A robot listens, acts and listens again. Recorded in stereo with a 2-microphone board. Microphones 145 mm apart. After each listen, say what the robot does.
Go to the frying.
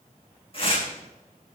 Keep listening.
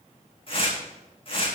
Keep listening.
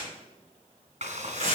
Turn 50° right.
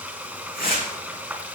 Turn 10° right.
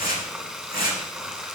Drive 1.0 m forward.
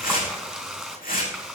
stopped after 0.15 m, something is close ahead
Blocked. The frying is further on, straight ahead.